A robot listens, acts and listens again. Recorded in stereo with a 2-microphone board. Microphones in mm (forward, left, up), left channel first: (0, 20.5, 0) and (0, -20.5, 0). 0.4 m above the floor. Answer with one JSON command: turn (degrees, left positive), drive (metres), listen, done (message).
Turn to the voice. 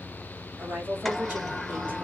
{"turn": -45}
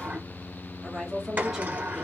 {"turn": -15}
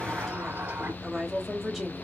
{"done": "Found it: a woman speaking, straight ahead, 1 to 2 m away."}